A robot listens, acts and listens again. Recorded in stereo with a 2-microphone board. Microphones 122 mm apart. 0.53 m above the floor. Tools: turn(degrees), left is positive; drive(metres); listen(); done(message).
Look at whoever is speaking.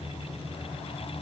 listen()
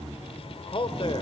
turn(degrees=45)
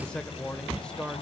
turn(degrees=10)
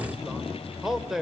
done("Found it: a man speaking, straight ahead, 1 to 2 m away.")